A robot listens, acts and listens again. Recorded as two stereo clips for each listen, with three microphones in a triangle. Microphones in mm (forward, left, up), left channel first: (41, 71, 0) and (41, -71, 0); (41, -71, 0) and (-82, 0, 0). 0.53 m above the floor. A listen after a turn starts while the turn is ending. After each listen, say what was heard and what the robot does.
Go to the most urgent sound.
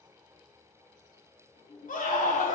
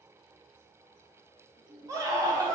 The scream: 85° left. Turn 85° left.
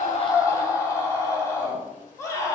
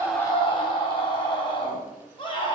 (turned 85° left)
The scream is now 20° left. Turn 20° left.
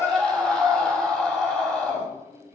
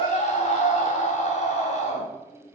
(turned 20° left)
Drive 1.0 m forward.
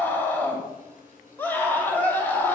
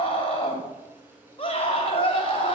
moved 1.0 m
The scream is now 15° left. Turn 15° left.
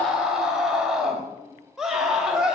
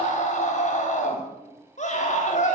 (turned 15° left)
Drive 1.0 m forward.
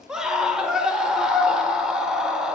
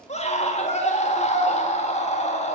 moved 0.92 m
Drive 1.0 m forward.
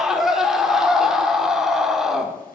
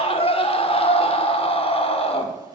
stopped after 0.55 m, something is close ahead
Arrived at the scream, straight ahead.